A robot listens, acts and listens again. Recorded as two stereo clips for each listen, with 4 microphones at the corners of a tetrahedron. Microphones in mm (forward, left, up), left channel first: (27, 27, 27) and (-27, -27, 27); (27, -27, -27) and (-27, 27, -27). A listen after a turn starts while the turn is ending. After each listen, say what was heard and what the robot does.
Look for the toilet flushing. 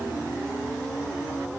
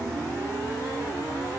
Keep listening.
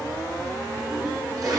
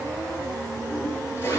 The toilet flushing: 100° right. Turn 100° right.
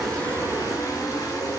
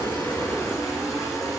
Keep listening.
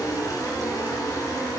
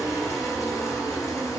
Keep listening.
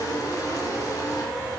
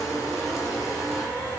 I heard a toilet flushing from this way, but can't make it out now.